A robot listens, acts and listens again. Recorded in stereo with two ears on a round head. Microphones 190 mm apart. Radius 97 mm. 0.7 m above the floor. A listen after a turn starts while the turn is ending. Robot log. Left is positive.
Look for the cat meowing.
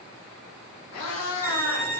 cmd yaw +90
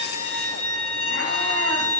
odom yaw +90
cmd idle
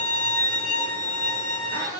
note: The cat meowing is now 15° right.
cmd yaw -15
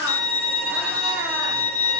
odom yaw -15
cmd idle
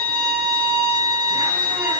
cmd idle
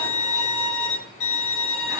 end: Facing where the cat meowing came from. I can't hear it now.